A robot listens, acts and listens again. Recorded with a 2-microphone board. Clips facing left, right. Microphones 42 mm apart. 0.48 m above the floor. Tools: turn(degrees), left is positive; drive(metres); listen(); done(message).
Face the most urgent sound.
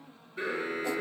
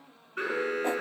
turn(degrees=-60)
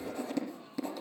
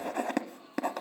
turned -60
listen()
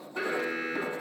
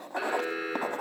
done("Facing the alarm.")